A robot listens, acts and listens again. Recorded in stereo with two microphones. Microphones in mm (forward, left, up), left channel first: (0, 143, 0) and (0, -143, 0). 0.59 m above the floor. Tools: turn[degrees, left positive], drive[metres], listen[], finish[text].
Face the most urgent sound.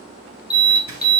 Thought: The alarm: about 35° left or 145° left.
Action: turn[35]
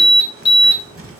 Thought: So it is at 110° left.
Action: turn[110]
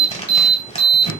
Thought: The alarm is now 30° left.
Action: turn[30]
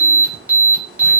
Action: finish[Found it: an alarm, straight ahead, 1 to 2 m away.]